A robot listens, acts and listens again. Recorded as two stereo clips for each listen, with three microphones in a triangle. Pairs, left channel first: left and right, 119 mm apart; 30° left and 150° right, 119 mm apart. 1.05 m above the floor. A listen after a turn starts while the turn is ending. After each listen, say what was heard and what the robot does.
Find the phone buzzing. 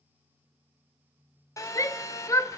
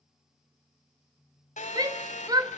The phone buzzing: 30° left. Turn 30° left.
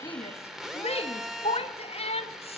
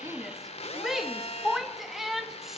Found it: a phone buzzing, straight ahead.